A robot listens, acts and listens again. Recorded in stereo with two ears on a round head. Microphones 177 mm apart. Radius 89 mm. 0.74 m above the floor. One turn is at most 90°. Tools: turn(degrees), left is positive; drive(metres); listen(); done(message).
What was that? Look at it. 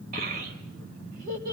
turn(degrees=-45)
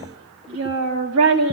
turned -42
turn(degrees=-90)
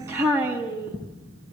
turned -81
turn(degrees=-10)
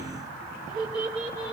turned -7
done("Facing the child speaking.")